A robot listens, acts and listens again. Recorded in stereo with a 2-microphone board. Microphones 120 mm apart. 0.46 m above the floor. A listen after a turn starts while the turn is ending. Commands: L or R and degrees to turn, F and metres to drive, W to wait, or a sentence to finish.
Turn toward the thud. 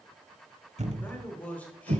R70
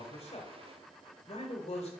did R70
W
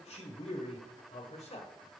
I heard a thud, but can't make it out now. It was about straight ahead or 40° right.